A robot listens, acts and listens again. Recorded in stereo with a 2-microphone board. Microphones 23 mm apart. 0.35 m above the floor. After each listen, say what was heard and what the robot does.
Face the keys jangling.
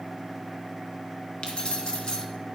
The keys jangling: about 40° left or 140° left. Turn 40° left.
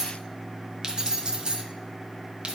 So it is at 55° right. Turn 55° right.
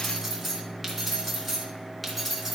Facing the keys jangling, 2 to 4 m away.